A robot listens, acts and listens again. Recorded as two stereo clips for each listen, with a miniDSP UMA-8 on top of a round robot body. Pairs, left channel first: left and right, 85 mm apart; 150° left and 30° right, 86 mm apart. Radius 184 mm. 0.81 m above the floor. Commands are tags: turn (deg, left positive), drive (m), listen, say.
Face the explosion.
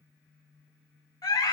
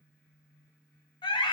<listen/>
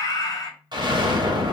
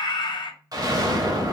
<turn deg="-70"/>
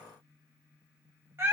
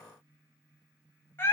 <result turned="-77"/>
<say>I heard an explosion from this way, but can't make it out now.</say>